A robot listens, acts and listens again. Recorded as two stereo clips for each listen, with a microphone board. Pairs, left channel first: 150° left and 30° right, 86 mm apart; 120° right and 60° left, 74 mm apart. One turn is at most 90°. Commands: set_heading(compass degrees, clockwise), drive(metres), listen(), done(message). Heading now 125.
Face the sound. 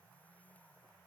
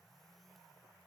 listen()
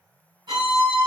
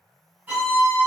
done("Found it: a violin, straight ahead.")